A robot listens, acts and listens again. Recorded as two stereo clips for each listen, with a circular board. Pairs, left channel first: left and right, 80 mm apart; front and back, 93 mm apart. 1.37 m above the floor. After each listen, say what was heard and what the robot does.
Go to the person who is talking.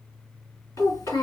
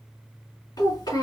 The child speaking: 40° left. Turn 40° left.
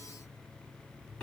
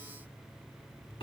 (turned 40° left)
Keep listening.
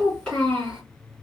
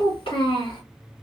Drive 1.0 m forward.
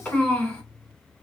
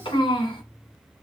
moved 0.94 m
The child speaking is now 10° left. Turn 10° left.
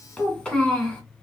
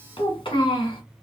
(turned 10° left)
Drive 1.0 m forward.
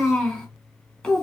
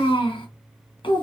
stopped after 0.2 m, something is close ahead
Arrived at the child speaking, straight ahead.